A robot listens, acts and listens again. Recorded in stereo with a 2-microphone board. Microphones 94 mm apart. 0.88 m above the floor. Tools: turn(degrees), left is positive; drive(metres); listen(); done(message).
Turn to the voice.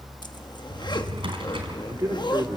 turn(degrees=-35)
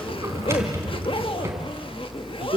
turn(degrees=-110)
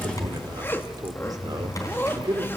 turn(degrees=-45)
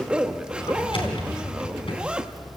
listen()
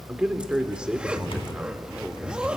turn(degrees=-10)
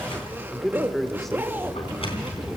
done("Found it: a man speaking, straight ahead, 2 to 4 m away.")